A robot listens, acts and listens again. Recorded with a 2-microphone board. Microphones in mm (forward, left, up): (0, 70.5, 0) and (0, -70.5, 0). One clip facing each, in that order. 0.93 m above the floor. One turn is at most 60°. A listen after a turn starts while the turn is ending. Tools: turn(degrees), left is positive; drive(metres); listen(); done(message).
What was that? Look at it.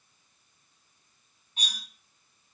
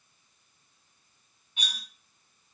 turn(degrees=35)
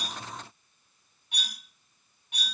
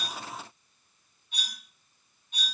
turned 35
turn(degrees=60)
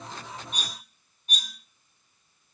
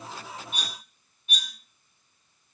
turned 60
turn(degrees=40)
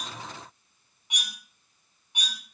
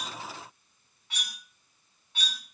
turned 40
turn(degrees=15)
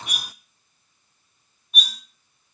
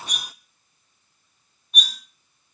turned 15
done("Found it: cutlery clinking, straight ahead, 1 to 2 m away.")